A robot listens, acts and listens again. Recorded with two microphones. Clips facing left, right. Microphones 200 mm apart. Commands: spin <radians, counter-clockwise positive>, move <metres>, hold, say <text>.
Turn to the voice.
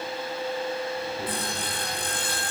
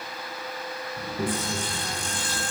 spin -0.87
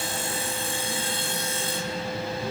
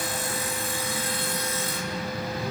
say Found it: a child speaking, straight ahead.